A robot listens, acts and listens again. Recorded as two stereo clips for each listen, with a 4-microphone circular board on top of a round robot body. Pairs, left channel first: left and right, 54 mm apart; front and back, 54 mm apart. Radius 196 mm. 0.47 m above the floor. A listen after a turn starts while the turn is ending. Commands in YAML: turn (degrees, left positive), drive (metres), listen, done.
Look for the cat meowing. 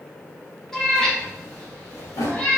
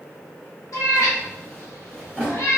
turn: 25
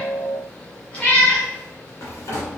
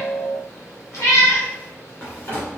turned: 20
turn: 25
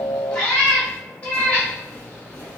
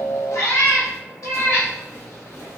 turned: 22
turn: 25
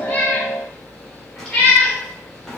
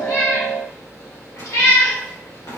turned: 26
done: "Found it: a cat meowing, straight ahead, 2 to 4 m away."